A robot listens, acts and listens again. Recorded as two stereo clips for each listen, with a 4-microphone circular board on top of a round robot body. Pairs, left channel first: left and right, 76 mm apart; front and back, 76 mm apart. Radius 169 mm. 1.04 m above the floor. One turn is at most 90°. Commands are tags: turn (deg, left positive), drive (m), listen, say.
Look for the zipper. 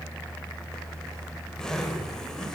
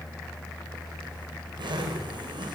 <turn deg="90"/>
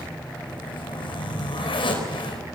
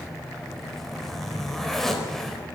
<turn deg="85"/>
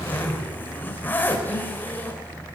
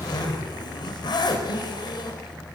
<turn deg="20"/>
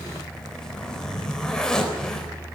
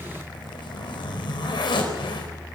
<say>Found it: a zipper, straight ahead.</say>